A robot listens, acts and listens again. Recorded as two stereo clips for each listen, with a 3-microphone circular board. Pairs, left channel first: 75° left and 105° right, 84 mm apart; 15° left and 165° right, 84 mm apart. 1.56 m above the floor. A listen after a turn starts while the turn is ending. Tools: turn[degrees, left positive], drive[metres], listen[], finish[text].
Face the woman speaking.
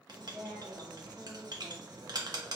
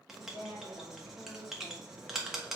Thought: The woman speaking: 30° right.
Action: turn[-30]
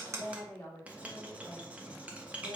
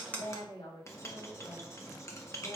Thought: The woman speaking is now 10° left.
Action: turn[10]
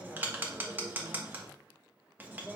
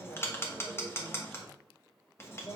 Thought: The woman speaking is now 10° right.
Action: turn[-10]
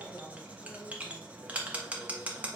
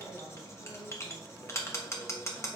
Action: finish[Facing the woman speaking.]